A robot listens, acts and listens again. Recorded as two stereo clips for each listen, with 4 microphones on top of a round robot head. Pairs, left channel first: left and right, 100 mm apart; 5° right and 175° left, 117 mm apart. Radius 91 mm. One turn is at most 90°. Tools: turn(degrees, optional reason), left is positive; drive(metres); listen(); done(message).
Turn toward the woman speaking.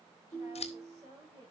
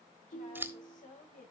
turn(degrees=-25, reason="The woman speaking: 25° right.")
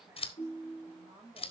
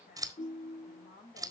turn(degrees=-10, reason="The woman speaking is now 10° right.")
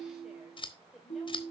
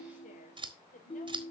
done("Found it: a woman speaking, straight ahead.")